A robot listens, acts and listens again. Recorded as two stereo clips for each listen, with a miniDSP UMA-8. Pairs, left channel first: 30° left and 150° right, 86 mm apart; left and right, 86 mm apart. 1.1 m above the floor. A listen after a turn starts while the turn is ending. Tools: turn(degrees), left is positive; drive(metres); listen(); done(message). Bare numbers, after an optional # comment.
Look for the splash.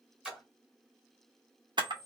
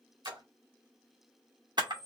# The splash: 70° right.
turn(-70)
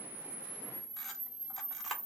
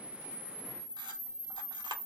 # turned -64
# Nothing new. It was at 10° right.
turn(-10)
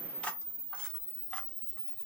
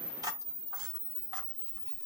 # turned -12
done("Facing where the splash came from. I can't hear it now.")